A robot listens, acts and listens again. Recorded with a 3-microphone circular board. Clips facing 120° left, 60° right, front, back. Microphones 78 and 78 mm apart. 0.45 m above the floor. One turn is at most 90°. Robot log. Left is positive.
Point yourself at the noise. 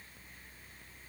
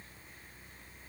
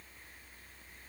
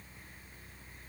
cmd idle
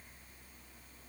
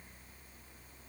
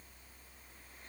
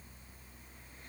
cmd idle
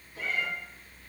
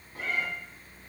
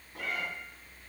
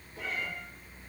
note: The cat meowing: 15° right.
cmd yaw -15
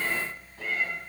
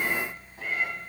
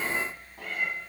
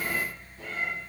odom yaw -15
note: The cat meowing is now 15° left.
cmd yaw +15
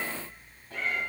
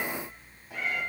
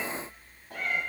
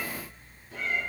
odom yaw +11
note: The cat meowing is now 20° left.
cmd yaw +20
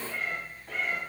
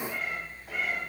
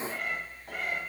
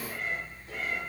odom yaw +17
note: The cat meowing is now 25° left.
cmd yaw +25
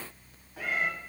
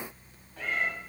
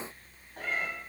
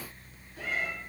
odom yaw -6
note: The cat meowing is now 40° left.
cmd yaw +40
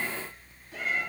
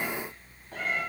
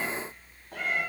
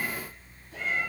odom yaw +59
note: The cat meowing is now 20° right.
cmd yaw -20
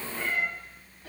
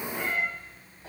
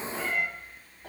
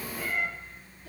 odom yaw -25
end: Facing the cat meowing, 1 to 2 m away.